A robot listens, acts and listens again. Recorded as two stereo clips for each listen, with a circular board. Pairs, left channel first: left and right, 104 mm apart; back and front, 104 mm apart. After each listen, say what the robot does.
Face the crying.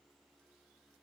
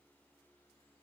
Keep listening.
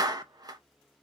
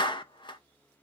Keep listening.
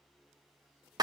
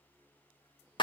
I can't make out crying, only a clap.